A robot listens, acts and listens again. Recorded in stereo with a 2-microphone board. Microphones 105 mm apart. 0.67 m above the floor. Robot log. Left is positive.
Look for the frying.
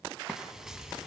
cmd yaw -30
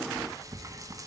note: So it is at 145° right.
cmd yaw -145
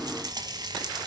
note: The frying is now 45° right.
cmd yaw -45
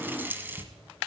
note: The frying is now 20° right.
cmd yaw -20
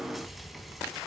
cmd idle
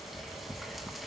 end: Found it: frying, straight ahead, 1 to 2 m away.